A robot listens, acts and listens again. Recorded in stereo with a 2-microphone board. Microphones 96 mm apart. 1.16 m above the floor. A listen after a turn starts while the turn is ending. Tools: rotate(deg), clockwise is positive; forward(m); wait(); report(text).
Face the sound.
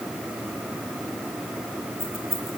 rotate(25)
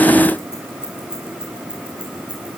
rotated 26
rotate(10)
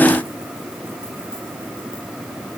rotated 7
wait()
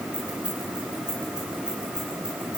rotate(10)
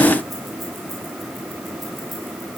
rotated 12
wait()
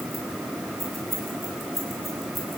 report("Facing the keys jangling, over 4 m away.")